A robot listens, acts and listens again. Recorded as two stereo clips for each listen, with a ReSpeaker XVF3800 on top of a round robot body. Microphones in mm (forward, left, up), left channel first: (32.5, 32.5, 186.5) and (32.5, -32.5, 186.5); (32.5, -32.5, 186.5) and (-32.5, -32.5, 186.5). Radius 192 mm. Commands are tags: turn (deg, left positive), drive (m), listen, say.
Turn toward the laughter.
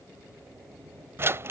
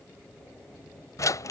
<listen/>
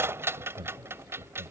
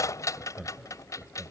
<turn deg="-100"/>
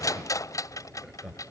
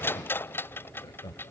<turn deg="-10"/>
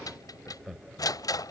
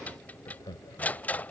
<say>Found it: laughter, straight ahead.</say>